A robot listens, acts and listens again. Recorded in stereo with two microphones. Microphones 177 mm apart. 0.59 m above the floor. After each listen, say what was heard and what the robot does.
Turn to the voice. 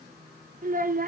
The child speaking: about 50° right or 130° right. Turn 50° right.
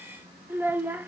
So it is at 10° right. Turn 10° right.
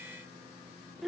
Found it: a child speaking, straight ahead.